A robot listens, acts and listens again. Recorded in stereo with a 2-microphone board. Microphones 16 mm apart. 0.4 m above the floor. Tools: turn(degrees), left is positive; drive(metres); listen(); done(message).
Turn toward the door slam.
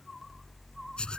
listen()
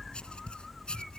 listen()
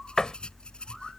turn(degrees=45)
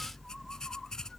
listen()
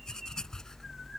done("I heard a door slam, but can't make it out now. It was about straight ahead or 90° left.")